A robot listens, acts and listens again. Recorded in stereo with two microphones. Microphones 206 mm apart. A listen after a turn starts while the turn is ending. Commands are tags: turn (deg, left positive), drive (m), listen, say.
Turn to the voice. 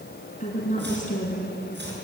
<turn deg="40"/>
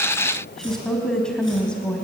<say>Found it: a woman speaking, straight ahead.</say>